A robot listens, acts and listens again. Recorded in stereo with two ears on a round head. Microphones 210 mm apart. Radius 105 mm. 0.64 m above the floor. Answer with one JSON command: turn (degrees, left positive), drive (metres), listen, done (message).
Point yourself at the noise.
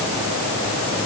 {"listen": true}
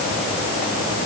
{"listen": true}
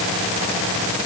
{"done": "I can't make out anything to turn to."}